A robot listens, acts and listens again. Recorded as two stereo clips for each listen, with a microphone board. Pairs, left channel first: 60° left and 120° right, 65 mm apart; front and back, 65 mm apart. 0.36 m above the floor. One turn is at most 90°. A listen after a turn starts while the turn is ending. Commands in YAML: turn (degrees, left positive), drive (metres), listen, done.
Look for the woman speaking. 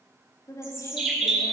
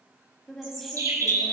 turn: 85
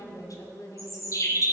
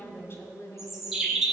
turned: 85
turn: 40
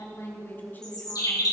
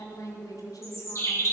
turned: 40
done: "Found it: a woman speaking, straight ahead, 2 to 4 m away."